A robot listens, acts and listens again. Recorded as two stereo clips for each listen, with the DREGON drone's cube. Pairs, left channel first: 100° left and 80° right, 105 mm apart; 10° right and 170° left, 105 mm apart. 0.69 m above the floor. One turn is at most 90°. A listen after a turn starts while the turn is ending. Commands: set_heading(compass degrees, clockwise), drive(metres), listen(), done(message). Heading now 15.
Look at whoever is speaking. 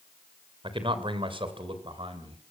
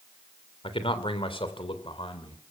set_heading(60)
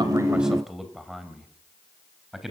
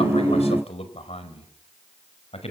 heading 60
set_heading(50)
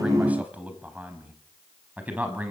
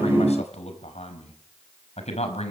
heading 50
done("Facing the man speaking, over 4 m away.")